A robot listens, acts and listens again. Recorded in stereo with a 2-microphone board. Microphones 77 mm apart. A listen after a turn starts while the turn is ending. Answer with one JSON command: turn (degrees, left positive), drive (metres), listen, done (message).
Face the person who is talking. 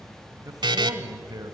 {"turn": -55}
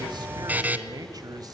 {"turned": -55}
{"turn": -65}
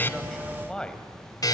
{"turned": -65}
{"turn": 10}
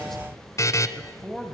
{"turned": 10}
{"done": "Found it: a man speaking, straight ahead."}